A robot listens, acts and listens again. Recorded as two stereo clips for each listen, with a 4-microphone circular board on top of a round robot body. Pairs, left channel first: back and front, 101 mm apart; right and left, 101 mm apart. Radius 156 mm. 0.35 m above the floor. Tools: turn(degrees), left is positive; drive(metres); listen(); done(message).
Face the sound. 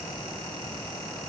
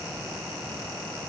listen()
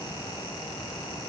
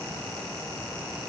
listen()
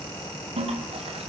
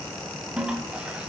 turn(degrees=10)
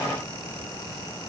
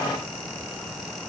listen()
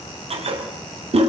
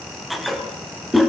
done("Found it: a toilet flushing, straight ahead.")